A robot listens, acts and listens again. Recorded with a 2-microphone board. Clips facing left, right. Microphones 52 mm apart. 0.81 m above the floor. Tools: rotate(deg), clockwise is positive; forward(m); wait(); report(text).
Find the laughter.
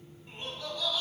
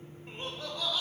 rotate(35)
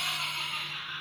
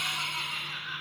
rotate(110)
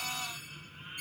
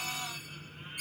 wait()
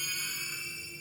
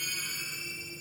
wait()
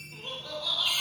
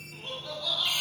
report("Facing the laughter, 2 to 4 m away.")